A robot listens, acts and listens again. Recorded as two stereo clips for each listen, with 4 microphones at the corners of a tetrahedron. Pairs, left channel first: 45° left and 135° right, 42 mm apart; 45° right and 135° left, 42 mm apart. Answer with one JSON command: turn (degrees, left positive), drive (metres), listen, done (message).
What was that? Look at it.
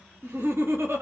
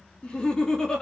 {"turn": -120}
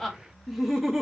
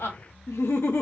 {"turn": -50}
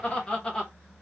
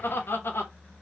{"turn": -25}
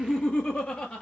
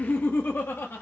{"turn": -15}
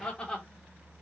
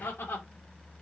{"turn": -15}
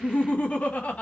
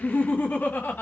{"done": "Found it: laughter, straight ahead, 1 to 2 m away."}